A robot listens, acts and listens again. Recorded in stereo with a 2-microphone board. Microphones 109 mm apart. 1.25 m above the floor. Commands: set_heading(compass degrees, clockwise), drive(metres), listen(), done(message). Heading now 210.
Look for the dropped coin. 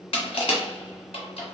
listen()
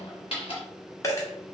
set_heading(185)
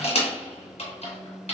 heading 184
listen()
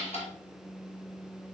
done("I heard a dropped coin, but can't make it out now. It was about straight ahead or 130° left.")